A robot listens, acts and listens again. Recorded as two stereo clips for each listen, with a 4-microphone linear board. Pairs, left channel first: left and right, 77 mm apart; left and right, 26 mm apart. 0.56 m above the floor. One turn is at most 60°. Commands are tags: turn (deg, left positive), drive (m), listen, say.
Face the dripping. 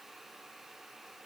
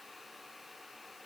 <listen/>
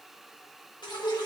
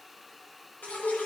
<turn deg="60"/>
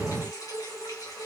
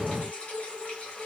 <turn deg="50"/>
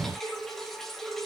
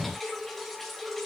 <say>Facing the dripping.</say>